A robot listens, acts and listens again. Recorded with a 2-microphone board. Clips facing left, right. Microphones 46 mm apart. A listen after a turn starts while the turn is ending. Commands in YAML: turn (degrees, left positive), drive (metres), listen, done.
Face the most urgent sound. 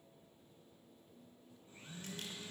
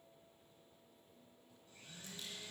listen: true
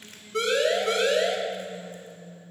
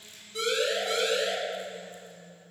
turn: 60
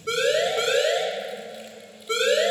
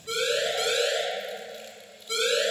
turn: 45
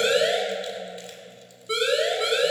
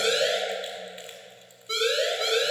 turn: 15
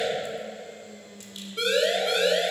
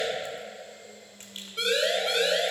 done: "Facing the siren."